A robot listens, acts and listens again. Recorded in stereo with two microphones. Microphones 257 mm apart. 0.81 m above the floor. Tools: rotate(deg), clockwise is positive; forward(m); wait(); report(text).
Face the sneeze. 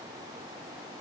wait()
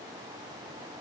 wait()
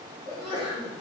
rotate(20)
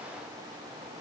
wait()
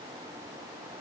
report("I heard a sneeze, but can't make it out now. It was about straight ahead or 140° right.")